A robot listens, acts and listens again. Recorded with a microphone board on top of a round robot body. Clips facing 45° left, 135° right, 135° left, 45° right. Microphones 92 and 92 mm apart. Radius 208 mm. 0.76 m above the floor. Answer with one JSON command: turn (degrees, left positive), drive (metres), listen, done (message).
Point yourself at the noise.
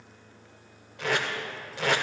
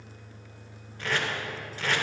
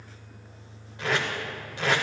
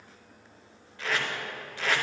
{"turn": 65}
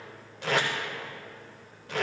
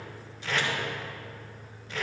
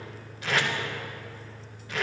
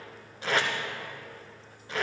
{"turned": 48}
{"turn": 15}
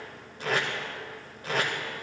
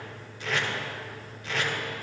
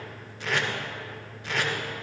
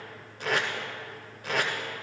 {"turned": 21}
{"done": "Facing the tape being pulled, under 1 m away."}